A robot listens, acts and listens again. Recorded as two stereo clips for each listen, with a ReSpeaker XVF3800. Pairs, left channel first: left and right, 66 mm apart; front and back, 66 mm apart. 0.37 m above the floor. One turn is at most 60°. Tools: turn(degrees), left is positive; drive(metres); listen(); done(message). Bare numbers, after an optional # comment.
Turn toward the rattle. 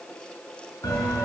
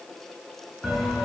listen()
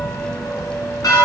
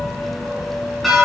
listen()
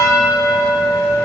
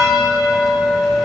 done("I can't make out a rattle, only a bell.")